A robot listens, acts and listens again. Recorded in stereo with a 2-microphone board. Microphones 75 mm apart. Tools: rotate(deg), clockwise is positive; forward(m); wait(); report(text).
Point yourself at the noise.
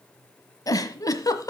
rotate(-50)
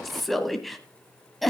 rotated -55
report("Found it: a giggle, straight ahead.")